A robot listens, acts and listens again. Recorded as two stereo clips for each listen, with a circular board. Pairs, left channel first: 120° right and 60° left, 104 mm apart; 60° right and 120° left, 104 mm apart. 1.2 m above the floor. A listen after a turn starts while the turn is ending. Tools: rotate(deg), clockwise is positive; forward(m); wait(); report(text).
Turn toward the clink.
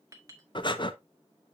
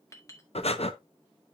report("Found it: a clink, straight ahead.")